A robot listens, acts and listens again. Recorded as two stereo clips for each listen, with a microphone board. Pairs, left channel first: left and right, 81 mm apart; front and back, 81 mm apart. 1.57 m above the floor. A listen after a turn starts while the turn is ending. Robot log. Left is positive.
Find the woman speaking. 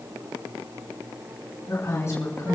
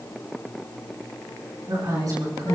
note: The woman speaking: 140° left.
cmd yaw +140
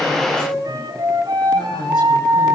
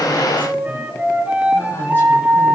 cmd idle
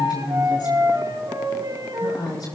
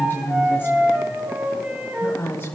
note: The woman speaking is now 60° left.
cmd yaw +60
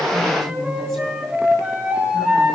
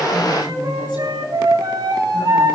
note: The woman speaking is now 10° left.
cmd yaw +10
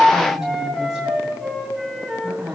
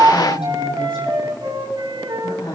end: Found it: a woman speaking, straight ahead.